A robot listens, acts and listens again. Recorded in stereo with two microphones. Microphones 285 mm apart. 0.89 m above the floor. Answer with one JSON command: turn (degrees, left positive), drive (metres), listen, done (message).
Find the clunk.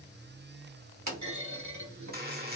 {"turn": -90}
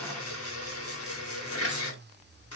{"done": "I heard a clunk from this way, but can't make it out now."}